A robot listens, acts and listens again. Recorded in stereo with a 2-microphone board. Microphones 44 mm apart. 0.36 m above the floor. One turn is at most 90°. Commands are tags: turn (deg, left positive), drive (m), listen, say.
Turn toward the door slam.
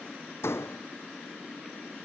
<turn deg="75"/>
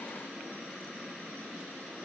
<listen/>
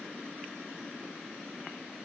<say>I heard a door slam, but can't make it out now. It was about straight ahead or 30° left.</say>